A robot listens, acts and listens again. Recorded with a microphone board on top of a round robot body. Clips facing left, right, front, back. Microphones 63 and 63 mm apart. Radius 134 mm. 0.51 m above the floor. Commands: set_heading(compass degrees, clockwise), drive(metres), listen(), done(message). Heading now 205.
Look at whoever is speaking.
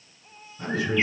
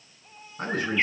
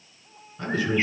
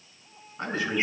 set_heading(320)
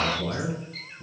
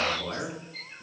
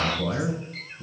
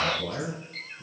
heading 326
done("Facing the man speaking.")